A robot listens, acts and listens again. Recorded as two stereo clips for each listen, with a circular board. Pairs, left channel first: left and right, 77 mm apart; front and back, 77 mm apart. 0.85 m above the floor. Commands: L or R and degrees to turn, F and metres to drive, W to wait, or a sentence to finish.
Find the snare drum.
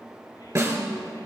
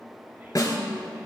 R45
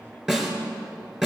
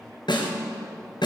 Facing the snare drum, 2 to 4 m away.